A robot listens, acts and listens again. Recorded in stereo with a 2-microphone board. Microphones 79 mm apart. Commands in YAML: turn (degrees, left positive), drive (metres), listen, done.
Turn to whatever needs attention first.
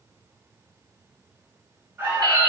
turn: -25
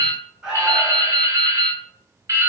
turn: -10
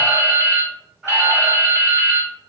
done: "Found it: an alarm, straight ahead."